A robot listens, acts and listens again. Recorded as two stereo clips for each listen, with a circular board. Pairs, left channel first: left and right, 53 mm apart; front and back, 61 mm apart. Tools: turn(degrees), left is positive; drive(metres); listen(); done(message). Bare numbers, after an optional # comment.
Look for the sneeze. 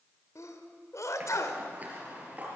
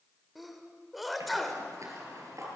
# The sneeze: 90° left.
turn(90)
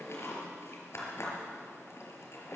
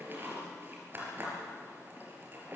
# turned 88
done("I heard a sneeze from this way, but can't make it out now.")